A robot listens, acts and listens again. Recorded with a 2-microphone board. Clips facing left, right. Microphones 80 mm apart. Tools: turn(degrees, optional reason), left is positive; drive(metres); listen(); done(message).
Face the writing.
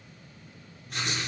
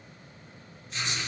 turn(degrees=55, reason="The writing: about 55° left or 125° left.")
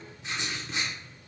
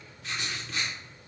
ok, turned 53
turn(degrees=25, reason="So it is at 25° left.")
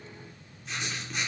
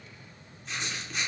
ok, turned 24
done("Found it: writing, straight ahead, under 1 m away.")